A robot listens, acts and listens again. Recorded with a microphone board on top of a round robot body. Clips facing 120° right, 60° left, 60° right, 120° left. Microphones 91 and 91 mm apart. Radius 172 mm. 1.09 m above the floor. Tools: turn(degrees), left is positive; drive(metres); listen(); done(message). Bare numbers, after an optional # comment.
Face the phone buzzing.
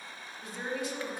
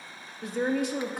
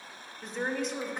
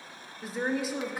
listen()
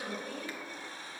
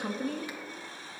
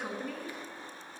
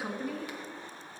listen()
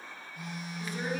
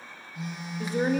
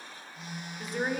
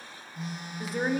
# The phone buzzing: 70° left.
turn(70)
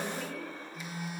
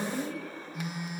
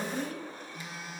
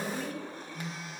# The phone buzzing is now 25° left.
turn(25)
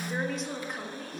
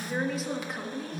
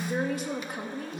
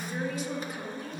done("Found it: a phone buzzing, straight ahead.")